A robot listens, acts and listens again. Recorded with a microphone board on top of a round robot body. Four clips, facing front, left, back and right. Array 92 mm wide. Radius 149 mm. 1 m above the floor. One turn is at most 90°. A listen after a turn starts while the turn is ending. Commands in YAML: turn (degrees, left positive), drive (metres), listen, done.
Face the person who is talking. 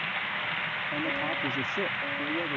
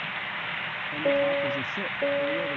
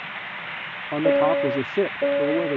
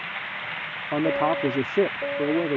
turn: -90
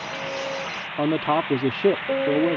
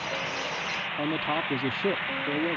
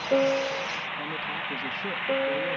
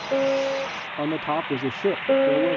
turn: -20
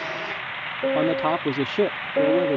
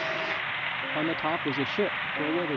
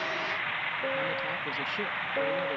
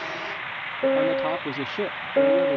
done: "Found it: a man speaking, straight ahead."